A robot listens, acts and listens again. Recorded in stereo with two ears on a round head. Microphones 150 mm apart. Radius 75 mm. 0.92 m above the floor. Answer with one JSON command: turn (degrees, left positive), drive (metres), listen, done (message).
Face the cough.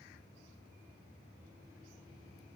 {"listen": true}
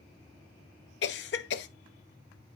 {"turn": 70}
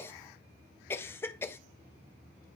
{"turn": 15}
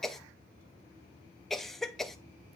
{"done": "Found it: a cough, straight ahead, under 1 m away."}